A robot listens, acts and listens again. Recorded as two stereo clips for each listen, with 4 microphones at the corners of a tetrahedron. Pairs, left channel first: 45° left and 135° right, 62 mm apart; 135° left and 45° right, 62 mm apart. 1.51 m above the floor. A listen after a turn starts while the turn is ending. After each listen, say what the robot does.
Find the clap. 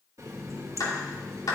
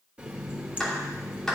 Turn 50° left.
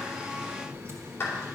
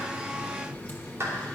Found it: a clap, straight ahead, 2 to 4 m away.